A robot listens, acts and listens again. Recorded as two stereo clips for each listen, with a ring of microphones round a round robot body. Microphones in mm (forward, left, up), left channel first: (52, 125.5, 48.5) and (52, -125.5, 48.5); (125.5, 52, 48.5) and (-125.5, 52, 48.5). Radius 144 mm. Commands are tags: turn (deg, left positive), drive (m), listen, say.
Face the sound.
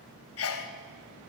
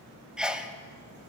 <turn deg="95"/>
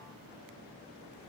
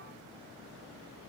<say>Facing where the sneeze came from. I can't hear it now.</say>